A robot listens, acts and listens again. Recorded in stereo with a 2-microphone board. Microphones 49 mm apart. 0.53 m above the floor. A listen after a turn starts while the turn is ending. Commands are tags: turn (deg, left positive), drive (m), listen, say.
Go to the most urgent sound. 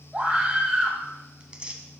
<turn deg="-25"/>
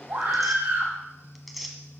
<turn deg="-135"/>
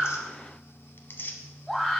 <drive m="1.0"/>
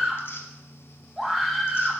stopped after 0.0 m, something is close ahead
<turn deg="-10"/>
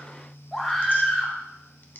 <say>Blocked. The scream is further on, straight ahead.</say>